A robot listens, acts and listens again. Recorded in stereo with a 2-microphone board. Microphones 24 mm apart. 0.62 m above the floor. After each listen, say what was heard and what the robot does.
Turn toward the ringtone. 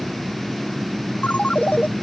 The ringtone: about 70° left or 110° left. Turn 70° left.
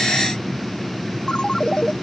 So it is at 40° left. Turn 40° left.
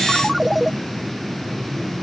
Facing the ringtone.